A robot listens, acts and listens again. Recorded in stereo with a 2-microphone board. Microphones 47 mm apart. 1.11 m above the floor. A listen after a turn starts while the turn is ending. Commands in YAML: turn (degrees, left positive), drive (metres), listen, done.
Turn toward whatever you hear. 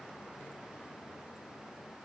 listen: true
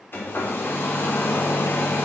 turn: 50
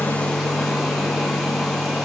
done: "Found it: a hair dryer, straight ahead."